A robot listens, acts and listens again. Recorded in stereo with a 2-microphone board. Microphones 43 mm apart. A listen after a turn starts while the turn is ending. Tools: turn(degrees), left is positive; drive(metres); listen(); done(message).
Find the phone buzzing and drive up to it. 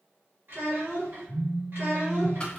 turn(degrees=-25)
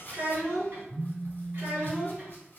turn(degrees=-125)
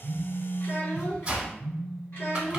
turn(degrees=35)
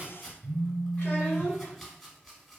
drive(metres=1.0)
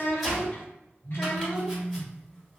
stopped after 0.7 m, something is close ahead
done("Arrived at the phone buzzing, straight ahead.")